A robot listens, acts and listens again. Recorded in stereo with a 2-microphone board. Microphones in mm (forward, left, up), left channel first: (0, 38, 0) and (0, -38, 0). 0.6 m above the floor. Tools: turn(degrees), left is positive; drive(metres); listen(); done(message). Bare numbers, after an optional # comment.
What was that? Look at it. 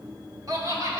# The laughter: about 45° right or 135° right.
turn(-45)
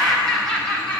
# So it is at 15° left.
turn(15)
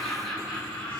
# The laughter is now 15° left.
turn(15)
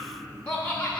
# The laughter is now 15° left.
turn(15)
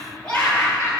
# The laughter is now 15° left.
turn(15)
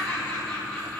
# The laughter is now 10° left.
turn(10)
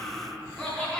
done("Facing the laughter, 2 to 4 m away.")